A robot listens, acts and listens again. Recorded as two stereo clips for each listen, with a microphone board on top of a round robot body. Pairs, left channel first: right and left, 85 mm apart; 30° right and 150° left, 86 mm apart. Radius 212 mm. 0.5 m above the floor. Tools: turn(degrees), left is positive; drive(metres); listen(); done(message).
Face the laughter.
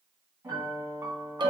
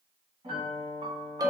listen()
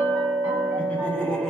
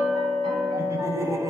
turn(degrees=-170)
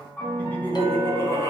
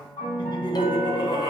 turn(degrees=-40)
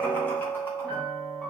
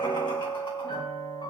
listen()
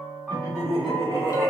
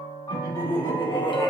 turn(degrees=-35)
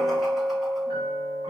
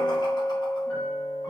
listen()
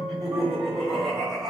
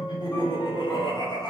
done("Facing the laughter.")